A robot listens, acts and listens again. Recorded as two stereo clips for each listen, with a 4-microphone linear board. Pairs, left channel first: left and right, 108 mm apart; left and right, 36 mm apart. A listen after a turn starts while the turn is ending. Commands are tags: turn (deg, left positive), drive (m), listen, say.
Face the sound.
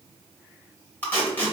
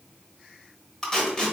<turn deg="15"/>
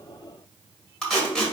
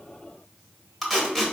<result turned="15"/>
<say>Facing the tape being pulled.</say>